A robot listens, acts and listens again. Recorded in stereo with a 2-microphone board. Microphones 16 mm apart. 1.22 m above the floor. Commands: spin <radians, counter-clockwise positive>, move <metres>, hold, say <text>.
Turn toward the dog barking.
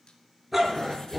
spin -0.52
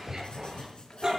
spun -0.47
spin -2.53
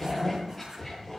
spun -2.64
say Facing the dog barking.